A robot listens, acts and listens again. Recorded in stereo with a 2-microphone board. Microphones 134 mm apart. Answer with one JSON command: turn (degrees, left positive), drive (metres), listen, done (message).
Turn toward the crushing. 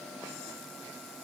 {"listen": true}
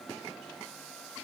{"listen": true}
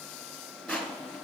{"turn": 30}
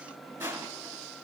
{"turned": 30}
{"turn": -20}
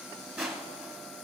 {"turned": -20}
{"done": "Found it: crushing, straight ahead, 1 to 2 m away."}